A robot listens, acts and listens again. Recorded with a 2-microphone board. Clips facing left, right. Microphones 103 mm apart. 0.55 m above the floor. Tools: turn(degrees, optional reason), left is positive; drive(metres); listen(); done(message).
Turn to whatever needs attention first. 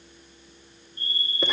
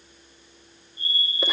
turn(degrees=70, reason="The fire alarm: about 70° left or 110° left.")
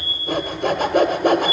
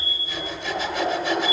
turn(degrees=25, reason="So it is at 25° left.")
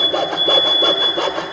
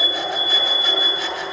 done("Facing the fire alarm, over 4 m away.")